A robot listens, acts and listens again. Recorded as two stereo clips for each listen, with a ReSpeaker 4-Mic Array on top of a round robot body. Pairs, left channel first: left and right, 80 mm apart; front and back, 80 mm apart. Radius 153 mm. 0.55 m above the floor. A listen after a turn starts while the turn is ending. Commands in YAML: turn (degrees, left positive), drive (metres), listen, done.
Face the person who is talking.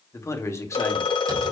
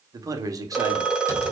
turn: 140
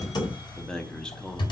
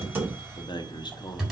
turn: 10
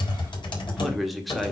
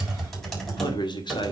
done: "Facing the man speaking, 1 to 2 m away."